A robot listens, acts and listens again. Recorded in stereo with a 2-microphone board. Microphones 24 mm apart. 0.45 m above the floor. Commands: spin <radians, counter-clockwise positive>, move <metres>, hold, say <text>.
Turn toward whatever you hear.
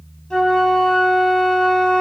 spin 0.52
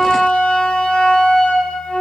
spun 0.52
spin 2.18
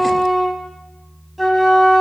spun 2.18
say Found it: a flute, straight ahead, 2 to 4 m away.